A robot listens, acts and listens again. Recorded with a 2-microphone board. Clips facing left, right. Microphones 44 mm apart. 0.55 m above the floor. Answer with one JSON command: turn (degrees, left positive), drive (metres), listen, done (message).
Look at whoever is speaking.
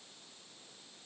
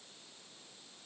{"listen": true}
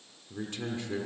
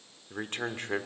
{"turn": -50}
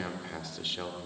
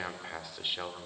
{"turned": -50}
{"turn": -20}
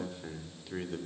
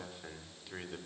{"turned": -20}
{"done": "Found it: a man speaking, straight ahead, 1 to 2 m away."}